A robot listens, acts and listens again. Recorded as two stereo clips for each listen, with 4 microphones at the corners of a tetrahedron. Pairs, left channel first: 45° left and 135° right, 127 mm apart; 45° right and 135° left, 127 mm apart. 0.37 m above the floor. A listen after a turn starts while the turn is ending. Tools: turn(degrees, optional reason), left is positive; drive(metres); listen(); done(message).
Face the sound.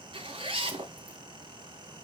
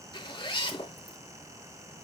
turn(degrees=-95, reason="The zipper: 95° right.")
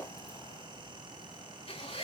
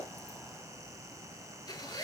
turn(degrees=10, reason="The zipper is now 10° left.")
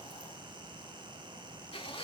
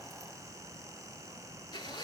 done("Found it: a zipper, straight ahead, 2 to 4 m away.")